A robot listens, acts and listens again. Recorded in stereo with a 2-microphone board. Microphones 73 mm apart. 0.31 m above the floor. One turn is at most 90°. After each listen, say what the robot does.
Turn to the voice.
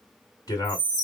Turn 60° left.
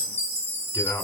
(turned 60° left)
Turn 45° left.
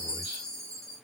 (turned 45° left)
Keep listening.
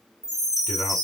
Keep listening.
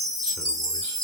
I heard a man speaking from this way, but can't make it out now.